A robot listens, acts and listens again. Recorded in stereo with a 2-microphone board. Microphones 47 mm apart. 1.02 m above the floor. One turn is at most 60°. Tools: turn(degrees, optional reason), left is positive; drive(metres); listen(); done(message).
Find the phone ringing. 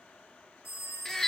turn(degrees=60)
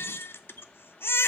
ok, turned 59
turn(degrees=30, reason="Nothing new. It was at 30° left.")
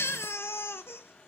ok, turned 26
listen()
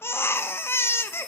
done("I heard a phone ringing from this way, but can't make it out now.")